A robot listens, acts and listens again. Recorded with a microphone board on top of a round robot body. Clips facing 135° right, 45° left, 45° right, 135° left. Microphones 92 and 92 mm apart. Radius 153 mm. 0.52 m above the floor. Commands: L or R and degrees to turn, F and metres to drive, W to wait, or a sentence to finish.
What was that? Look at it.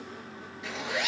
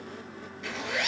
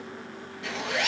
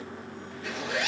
R60
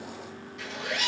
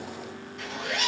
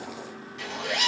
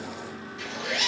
R10
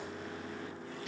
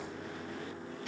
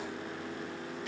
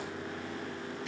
W
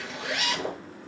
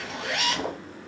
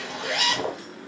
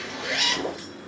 Found it: a zipper, straight ahead.